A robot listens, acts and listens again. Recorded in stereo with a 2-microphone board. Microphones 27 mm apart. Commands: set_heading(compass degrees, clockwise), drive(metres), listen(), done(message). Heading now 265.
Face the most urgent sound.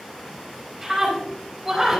set_heading(295)
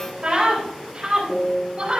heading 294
set_heading(69)
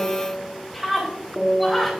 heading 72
done("Found it: a scream, straight ahead.")